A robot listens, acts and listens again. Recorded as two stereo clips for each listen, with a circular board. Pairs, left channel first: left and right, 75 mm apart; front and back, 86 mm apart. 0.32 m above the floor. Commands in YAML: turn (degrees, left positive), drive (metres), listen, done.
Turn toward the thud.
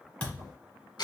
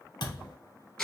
turn: 20
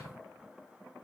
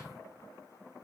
done: "Facing where the thud came from. I can't hear it now."